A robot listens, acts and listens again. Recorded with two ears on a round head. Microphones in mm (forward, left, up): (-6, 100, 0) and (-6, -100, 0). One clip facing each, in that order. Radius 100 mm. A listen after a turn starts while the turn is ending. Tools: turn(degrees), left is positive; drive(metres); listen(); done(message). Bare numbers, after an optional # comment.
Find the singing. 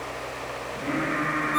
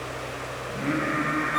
# The singing: about 20° right or 160° right.
turn(-20)
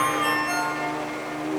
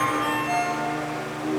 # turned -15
# The singing: about 25° right or 155° right.
turn(-25)
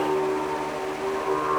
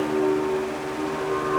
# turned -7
# The singing: about 25° right or 155° right.
turn(-25)
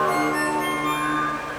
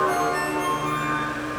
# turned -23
listen()
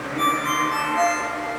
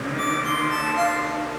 # So it is at 140° right.
turn(-140)
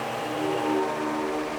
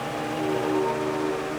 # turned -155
# The singing is now 15° left.
turn(15)
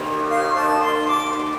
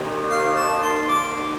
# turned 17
done("Facing the singing.")